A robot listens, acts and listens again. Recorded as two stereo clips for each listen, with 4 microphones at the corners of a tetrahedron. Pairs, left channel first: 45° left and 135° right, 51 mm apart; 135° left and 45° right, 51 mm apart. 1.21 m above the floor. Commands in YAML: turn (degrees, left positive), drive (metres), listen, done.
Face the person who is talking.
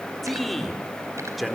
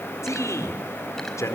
turn: 135
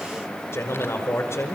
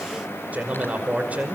turn: 15
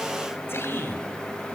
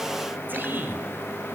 done: "Facing the man speaking."